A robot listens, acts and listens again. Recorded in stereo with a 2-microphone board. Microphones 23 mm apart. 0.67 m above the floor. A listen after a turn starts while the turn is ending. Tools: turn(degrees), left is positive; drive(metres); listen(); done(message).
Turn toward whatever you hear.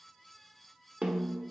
turn(degrees=-60)
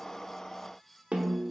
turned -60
turn(degrees=-60)
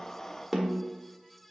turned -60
turn(degrees=-10)
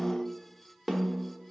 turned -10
done("Facing the snare drum.")